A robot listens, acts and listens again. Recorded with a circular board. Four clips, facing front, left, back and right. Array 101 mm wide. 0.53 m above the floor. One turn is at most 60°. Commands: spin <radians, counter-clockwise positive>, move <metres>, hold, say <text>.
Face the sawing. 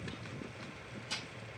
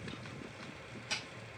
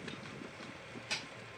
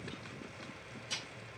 hold
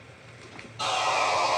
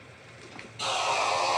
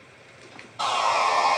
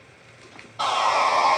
spin -1.05
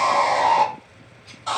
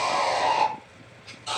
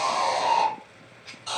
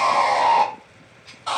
spin -0.87
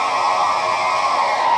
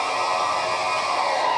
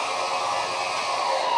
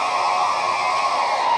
spin -0.35
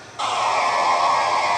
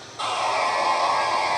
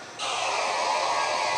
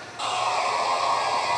say Found it: sawing, straight ahead.